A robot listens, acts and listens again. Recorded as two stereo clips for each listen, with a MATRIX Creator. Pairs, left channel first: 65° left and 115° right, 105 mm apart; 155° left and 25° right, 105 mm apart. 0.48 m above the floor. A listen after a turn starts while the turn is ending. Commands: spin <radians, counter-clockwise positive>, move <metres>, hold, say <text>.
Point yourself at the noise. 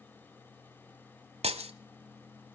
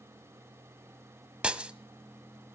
spin -1.83
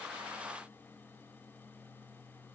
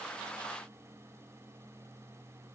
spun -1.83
say Facing where the breaking glass came from. I can't hear it now.